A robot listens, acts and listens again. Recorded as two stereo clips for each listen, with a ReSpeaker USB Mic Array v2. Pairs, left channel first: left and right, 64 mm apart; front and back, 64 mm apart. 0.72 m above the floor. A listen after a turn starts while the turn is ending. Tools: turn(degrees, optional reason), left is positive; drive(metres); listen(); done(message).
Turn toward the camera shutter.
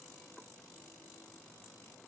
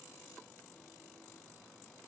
listen()
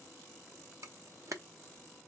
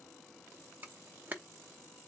turn(degrees=-120, reason="The camera shutter: 120° right.")
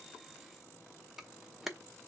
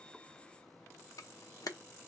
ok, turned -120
done("Found it: a camera shutter, straight ahead.")